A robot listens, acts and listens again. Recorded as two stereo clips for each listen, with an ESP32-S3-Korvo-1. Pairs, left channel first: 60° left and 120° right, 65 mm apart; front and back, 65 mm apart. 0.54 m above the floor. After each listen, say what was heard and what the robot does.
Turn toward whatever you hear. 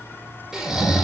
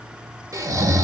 The snoring: 160° left. Turn 160° left.
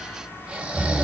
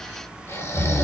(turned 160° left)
The snoring is now 45° right. Turn 45° right.
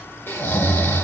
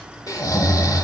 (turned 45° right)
Found it: snoring, straight ahead.